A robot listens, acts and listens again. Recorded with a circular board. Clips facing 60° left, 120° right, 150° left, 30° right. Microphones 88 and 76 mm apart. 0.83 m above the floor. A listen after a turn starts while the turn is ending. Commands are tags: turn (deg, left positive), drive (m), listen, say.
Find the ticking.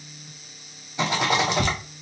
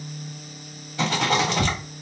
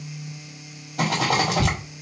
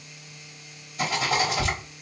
<turn deg="65"/>
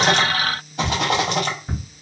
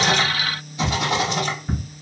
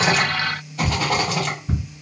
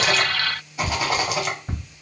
<turn deg="-20"/>
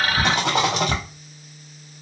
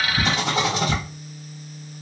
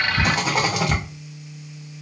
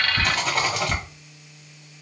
<say>Found it: ticking, straight ahead, 2 to 4 m away.</say>